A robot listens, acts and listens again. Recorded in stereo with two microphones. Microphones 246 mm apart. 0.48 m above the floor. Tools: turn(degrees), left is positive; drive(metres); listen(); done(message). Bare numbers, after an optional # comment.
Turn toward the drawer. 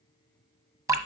listen()
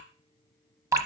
listen()
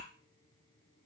done("I can't make out a drawer to turn to.")